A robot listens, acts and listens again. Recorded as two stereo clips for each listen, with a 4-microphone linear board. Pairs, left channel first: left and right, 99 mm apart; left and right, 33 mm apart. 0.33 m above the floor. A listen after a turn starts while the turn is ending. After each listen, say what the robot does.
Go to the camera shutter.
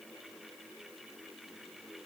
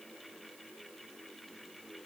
Keep listening.
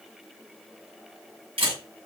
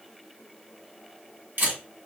Turn 65° right.
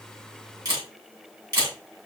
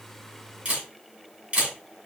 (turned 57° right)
Turn 40° right.
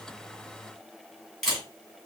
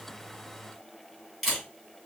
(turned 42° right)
Drive 1.0 m forward.
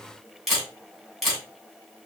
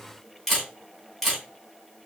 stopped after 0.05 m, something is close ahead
Blocked. The camera shutter is further on, straight ahead.